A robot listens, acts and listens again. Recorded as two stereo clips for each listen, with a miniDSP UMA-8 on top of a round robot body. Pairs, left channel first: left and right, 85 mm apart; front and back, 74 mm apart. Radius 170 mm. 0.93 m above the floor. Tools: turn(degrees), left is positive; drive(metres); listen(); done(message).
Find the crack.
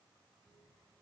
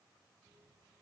listen()
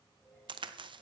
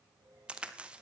turn(degrees=-105)
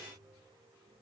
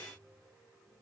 done("I heard a crack from this way, but can't make it out now.")